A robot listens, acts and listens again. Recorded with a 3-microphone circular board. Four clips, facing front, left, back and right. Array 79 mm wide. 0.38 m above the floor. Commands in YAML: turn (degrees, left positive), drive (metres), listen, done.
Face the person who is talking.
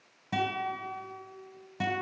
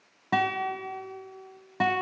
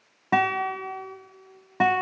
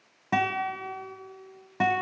listen: true
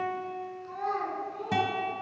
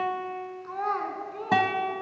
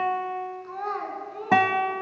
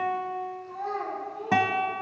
turn: 120
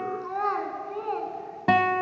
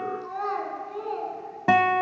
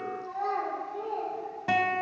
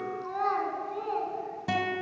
done: "Found it: a child speaking, straight ahead."